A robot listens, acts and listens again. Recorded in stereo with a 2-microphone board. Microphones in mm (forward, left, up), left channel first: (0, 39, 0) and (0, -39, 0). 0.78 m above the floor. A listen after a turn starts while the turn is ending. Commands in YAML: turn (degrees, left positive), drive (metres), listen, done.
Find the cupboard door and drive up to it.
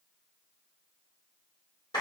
listen: true
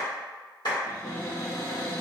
turn: 45
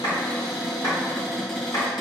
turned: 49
drive: 1.0
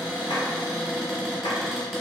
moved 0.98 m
drive: 1.0
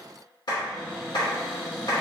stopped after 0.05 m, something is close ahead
done: "I am next to the cupboard door."